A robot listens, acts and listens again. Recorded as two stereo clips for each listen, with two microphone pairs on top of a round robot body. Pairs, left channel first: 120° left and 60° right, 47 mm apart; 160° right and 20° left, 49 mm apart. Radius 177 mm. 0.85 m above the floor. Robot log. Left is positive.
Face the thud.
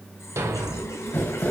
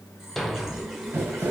note: The thud: 75° right.
cmd yaw -75
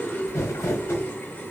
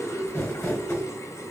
end: Facing where the thud came from. I can't hear it now.